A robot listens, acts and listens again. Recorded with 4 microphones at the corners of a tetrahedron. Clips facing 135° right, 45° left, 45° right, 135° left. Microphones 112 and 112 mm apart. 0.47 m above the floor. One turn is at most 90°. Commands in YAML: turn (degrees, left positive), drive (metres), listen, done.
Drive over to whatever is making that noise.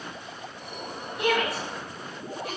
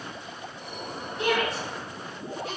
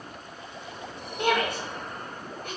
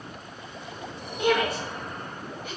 turn: -50
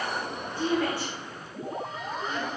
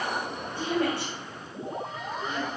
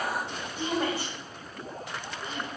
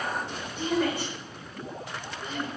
drive: 1.0
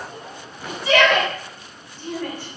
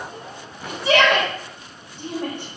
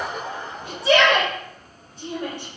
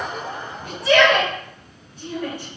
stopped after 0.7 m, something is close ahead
done: "I am next to the shout."